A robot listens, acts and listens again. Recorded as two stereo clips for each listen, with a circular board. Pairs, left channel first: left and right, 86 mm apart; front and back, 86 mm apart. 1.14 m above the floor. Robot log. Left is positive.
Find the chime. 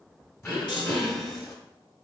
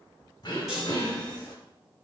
note: The chime: 90° left.
cmd yaw +90
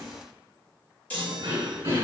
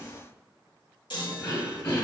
note: The chime is now 15° left.
cmd yaw +15
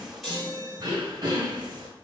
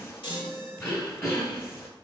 end: Facing the chime, 1 to 2 m away.